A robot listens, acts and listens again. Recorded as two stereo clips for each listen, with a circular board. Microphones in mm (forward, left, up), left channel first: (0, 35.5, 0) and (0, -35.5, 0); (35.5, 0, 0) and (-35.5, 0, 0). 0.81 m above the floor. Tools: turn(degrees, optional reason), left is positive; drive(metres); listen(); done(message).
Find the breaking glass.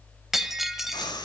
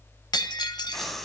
done("Found it: breaking glass, straight ahead.")